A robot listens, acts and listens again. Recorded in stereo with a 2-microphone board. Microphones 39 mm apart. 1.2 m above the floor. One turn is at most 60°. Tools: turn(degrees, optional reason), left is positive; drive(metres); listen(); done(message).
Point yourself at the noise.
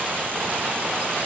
listen()
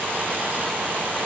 listen()
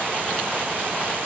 done("I can't make out anything.")